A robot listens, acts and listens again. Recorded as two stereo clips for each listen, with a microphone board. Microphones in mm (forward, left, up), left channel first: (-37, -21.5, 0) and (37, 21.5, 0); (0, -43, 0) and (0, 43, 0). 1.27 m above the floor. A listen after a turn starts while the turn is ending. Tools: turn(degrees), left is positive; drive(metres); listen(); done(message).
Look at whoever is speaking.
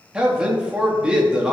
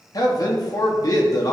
turn(degrees=-50)
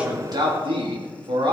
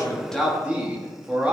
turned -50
turn(degrees=15)
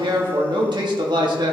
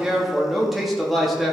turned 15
done("Found it: a man speaking, straight ahead, 1 to 2 m away.")